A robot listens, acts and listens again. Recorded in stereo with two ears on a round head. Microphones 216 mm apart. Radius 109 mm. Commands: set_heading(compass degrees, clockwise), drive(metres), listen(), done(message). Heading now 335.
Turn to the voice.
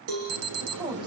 set_heading(355)
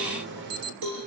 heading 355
listen()
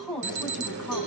done("Facing the woman speaking, over 4 m away.")